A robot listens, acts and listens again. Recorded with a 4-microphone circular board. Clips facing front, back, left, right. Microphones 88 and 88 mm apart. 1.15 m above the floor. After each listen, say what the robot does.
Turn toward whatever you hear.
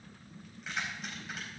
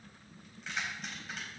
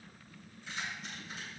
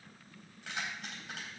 Turn 90° right.
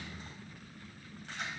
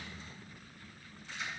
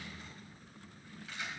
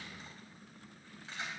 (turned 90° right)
Turn 30° right.
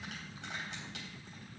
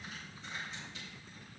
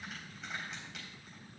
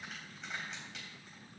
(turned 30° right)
Found it: keys jangling, straight ahead, over 4 m away.